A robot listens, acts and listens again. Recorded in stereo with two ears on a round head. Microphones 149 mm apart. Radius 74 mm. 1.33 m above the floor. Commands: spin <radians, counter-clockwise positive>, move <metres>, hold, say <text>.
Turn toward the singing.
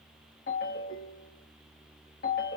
hold
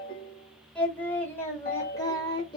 spin 0.52
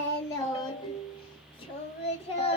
spin 0.61
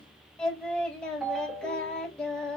say Found it: singing, straight ahead, 1 to 2 m away.